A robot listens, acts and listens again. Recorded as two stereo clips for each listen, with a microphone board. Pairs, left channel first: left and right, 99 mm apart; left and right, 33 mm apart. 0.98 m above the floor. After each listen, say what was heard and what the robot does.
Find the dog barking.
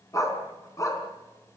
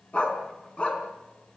The dog barking: about 30° left or 150° left. Turn 30° left.
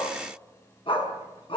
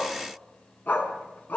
So it is at 120° left. Turn 120° left.
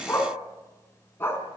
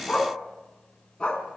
The dog barking is now 25° left. Turn 25° left.
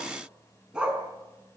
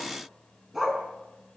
The dog barking is now 10° right. Turn 10° right.
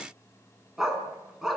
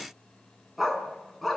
Found it: a dog barking, straight ahead.